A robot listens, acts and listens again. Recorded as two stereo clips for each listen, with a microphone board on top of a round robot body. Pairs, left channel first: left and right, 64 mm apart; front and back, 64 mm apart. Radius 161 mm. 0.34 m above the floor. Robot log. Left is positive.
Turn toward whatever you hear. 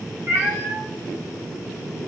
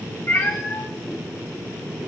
note: The cat meowing: 45° right.
cmd yaw -45
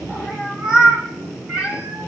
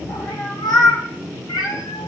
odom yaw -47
note: The cat meowing is now 20° right.
cmd yaw -20
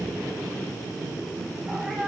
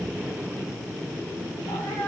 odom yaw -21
cmd idle
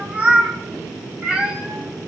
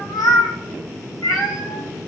note: The cat meowing is now 25° right.
cmd yaw -25
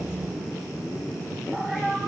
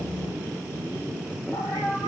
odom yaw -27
end: Found it: a cat meowing, straight ahead.